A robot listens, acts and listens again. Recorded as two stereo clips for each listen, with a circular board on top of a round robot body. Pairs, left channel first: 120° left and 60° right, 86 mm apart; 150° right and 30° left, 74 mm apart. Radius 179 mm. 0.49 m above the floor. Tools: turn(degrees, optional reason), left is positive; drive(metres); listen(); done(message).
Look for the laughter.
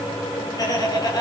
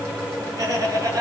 turn(degrees=75, reason="The laughter: 75° left.")
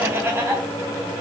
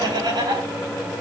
done("Facing the laughter.")